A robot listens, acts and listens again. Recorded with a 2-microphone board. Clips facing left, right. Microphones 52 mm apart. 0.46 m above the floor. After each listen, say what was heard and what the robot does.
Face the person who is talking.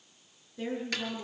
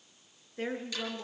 The woman speaking: about 45° right or 135° right. Turn 45° right.
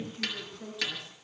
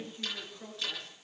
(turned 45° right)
Facing the woman speaking, over 4 m away.